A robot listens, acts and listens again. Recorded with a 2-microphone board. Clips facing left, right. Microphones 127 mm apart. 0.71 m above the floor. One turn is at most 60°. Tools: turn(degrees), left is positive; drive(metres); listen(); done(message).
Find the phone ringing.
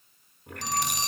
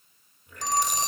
turn(degrees=-45)
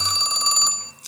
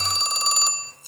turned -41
done("Found it: a phone ringing, straight ahead.")